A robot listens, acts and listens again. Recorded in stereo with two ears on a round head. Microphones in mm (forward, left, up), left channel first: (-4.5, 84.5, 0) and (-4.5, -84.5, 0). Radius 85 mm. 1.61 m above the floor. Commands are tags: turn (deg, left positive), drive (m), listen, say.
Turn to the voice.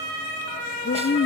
<turn deg="60"/>
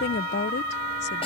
<turn deg="60"/>
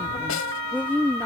<turn deg="10"/>
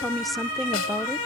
<say>Facing the woman speaking.</say>